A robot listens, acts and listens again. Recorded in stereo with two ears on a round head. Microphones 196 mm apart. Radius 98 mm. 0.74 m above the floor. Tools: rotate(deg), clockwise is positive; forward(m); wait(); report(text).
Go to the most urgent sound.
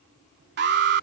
rotate(55)
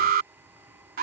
rotate(55)
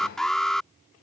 forward(1.0)
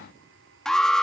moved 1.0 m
forward(1.0)
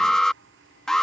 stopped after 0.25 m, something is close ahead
report("Arrived at the alarm, straight ahead.")